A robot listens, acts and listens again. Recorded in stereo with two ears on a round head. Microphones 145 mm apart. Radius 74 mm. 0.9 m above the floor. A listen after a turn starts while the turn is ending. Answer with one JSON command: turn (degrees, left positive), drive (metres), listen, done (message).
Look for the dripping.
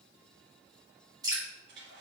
{"turn": -25}
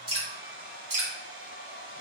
{"turn": -130}
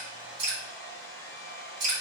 {"turn": -45}
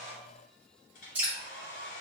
{"turn": -10}
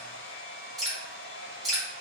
{"done": "Found it: dripping, straight ahead."}